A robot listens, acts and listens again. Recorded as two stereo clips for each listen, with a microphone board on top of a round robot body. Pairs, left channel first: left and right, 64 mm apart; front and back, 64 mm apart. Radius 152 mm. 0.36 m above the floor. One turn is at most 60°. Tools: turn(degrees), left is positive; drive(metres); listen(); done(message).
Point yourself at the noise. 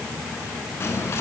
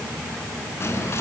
turn(degrees=45)
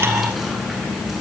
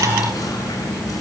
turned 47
done("Found it: whispering, straight ahead, over 4 m away.")